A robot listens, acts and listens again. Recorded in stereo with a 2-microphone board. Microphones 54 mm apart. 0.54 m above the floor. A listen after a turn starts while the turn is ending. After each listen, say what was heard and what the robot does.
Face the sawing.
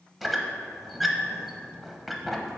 Keep listening.
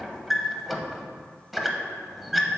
Keep listening.
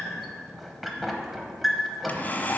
The sawing: about 35° left or 145° left. Turn 35° left.
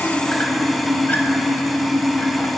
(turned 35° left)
Facing the sawing, under 1 m away.